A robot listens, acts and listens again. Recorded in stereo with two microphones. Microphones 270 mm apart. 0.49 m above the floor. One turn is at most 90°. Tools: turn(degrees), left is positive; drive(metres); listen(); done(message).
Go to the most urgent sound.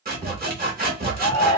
turn(degrees=-60)
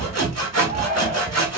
listen()
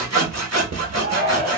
turn(degrees=-35)
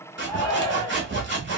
drive(metres=1.0)
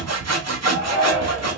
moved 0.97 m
drive(metres=1.0)
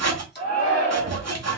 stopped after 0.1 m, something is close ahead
turn(degrees=15)
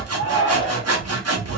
done("Arrived at the shout, straight ahead.")